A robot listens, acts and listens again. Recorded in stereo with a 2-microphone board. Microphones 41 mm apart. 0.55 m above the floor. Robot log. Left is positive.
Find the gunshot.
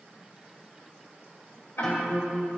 cmd idle
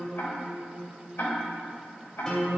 cmd idle
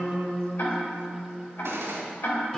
cmd yaw -90
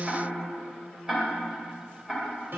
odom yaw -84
end: I heard a gunshot from this way, but can't make it out now.